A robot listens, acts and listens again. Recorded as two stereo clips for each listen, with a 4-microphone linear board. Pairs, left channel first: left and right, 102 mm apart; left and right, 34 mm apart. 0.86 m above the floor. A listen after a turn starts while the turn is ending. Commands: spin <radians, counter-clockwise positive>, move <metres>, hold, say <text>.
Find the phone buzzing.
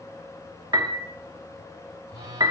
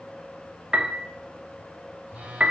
spin -0.79
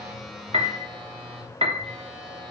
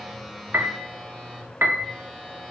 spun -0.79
say Facing the phone buzzing.